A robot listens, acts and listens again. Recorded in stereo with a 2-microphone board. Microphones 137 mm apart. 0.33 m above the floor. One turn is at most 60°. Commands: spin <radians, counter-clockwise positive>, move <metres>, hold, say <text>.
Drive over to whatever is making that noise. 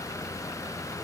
hold
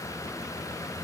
hold
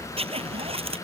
spin -0.79
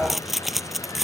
move 1.0
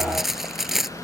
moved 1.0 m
move 1.0
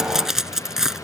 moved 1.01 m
move 1.0
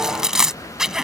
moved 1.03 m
move 1.0
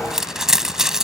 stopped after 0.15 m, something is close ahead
say Arrived at the zipper, straight ahead.